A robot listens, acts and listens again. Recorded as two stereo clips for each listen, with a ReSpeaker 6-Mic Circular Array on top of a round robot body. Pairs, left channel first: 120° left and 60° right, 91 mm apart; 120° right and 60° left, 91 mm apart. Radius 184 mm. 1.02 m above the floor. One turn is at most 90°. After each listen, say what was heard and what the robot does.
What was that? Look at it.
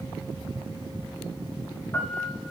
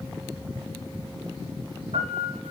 The piano: 45° left. Turn 45° left.
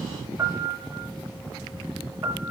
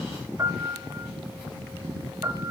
Found it: a piano, straight ahead, over 4 m away.